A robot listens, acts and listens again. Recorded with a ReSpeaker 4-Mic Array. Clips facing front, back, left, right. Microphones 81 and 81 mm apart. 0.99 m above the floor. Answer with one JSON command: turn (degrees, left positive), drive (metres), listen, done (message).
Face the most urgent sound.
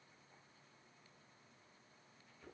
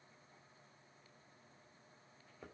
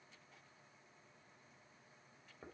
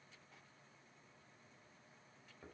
{"listen": true}
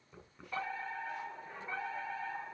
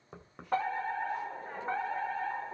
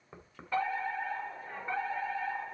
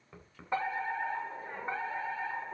{"turn": -155}
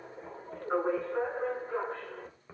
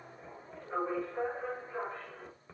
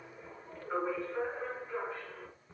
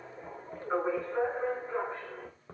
{"turn": -30}
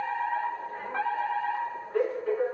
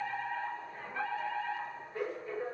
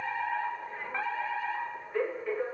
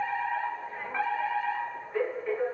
{"done": "Facing the fire alarm."}